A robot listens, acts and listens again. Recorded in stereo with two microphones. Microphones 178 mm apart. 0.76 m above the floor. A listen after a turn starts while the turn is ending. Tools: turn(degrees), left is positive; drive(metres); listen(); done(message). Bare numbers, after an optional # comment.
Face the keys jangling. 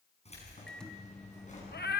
# The keys jangling: about 45° left or 135° left.
turn(45)
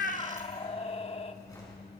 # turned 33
# So it is at 20° left.
turn(20)
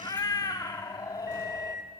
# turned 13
listen()
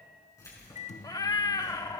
# The keys jangling is now 20° left.
turn(20)
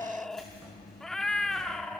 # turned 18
done("Facing the keys jangling.")